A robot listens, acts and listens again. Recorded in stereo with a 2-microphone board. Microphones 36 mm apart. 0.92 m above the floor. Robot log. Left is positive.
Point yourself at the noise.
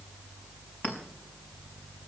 note: The clink: about 60° left or 120° left.
cmd yaw +60
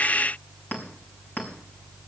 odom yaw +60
note: So it is at 55° left.
cmd yaw +55
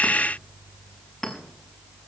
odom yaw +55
end: Facing the clink.